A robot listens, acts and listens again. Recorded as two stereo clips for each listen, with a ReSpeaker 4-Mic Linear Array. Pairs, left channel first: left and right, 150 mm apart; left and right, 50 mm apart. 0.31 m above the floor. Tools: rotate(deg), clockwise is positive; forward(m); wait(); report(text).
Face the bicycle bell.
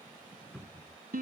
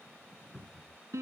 wait()
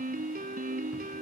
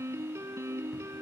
wait()
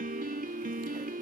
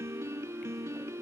report("I can't make out a bicycle bell to turn to.")